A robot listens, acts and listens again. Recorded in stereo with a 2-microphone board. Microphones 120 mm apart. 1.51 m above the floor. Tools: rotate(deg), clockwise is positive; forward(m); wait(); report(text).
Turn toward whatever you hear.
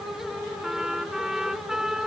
rotate(30)
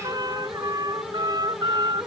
rotate(145)
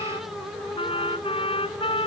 rotate(-55)
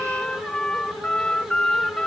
report("Facing the trumpet.")